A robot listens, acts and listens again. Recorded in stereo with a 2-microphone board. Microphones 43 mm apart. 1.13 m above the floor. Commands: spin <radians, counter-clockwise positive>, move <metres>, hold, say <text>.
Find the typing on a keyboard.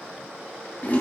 hold
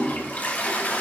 hold
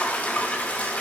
say I can't make out typing on a keyboard, only a toilet flushing.